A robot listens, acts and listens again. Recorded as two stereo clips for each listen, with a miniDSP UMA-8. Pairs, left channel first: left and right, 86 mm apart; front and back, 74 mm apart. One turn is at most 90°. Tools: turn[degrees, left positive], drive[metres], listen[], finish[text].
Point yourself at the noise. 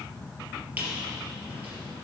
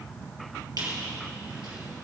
Thought: The squeak: 160° right.
Action: turn[-90]
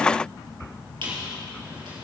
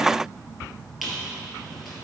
Thought: The squeak is now 90° right.
Action: turn[-90]
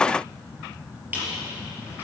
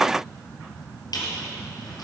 Thought: The squeak is now 20° right.
Action: turn[-20]
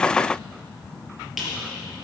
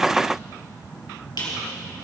Action: finish[Found it: a squeak, straight ahead, 2 to 4 m away.]